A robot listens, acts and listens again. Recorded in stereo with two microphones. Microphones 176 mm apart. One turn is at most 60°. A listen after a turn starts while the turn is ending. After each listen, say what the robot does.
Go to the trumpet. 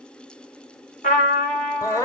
Turn 50° left.
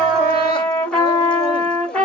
Drive 1.0 m forward.
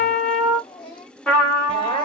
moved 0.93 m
Drive 1.0 m forward.
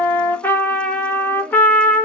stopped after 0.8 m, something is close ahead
Turn 15° left.
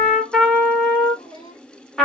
Arrived at the trumpet, straight ahead.